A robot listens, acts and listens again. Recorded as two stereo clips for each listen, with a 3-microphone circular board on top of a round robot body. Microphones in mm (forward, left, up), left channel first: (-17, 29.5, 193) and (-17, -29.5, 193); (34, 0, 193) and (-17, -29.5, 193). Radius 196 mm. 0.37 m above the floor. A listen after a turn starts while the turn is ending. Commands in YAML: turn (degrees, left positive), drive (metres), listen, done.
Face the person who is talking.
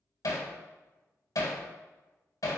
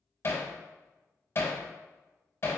listen: true
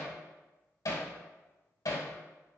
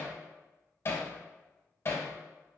listen: true
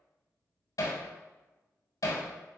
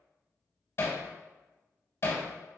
done: "I can't make out anyone speaking, only hammering."